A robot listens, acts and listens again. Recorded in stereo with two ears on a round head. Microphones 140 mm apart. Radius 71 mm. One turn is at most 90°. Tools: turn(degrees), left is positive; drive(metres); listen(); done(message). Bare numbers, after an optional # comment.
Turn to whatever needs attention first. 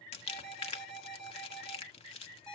turn(30)
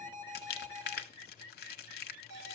# So it is at 30° right.
turn(-30)
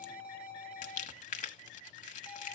# The alarm is now 10° right.
turn(-10)
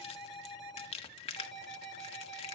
done("Found it: an alarm, straight ahead.")